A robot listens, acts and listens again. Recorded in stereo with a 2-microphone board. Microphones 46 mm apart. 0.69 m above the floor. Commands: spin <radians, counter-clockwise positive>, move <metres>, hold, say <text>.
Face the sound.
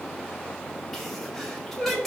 spin 0.52
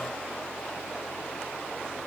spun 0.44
hold
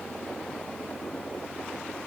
say I heard a sneeze, but can't make it out now. It was about 20° right or 150° left.